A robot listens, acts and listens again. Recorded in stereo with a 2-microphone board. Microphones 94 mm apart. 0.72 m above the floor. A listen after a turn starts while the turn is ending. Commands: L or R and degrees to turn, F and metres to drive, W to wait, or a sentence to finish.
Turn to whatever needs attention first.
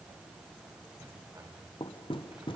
W
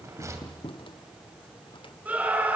R20
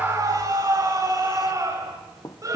R140
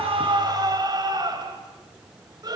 R45
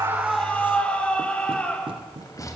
L15
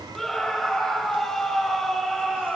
Facing the scream, 2 to 4 m away.